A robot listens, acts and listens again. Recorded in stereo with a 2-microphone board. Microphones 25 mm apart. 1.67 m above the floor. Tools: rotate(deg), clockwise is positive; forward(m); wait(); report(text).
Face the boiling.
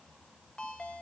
wait()
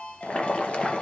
rotate(-55)
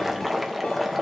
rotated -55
report("Found it: boiling, straight ahead, 2 to 4 m away.")